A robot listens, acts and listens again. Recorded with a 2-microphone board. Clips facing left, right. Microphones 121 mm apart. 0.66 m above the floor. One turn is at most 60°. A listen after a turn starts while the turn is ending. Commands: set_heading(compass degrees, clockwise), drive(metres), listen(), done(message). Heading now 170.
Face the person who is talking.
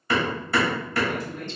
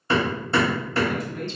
set_heading(225)
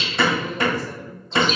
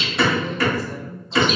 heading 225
listen()
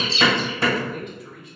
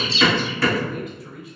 done("Facing the man speaking, 1 to 2 m away.")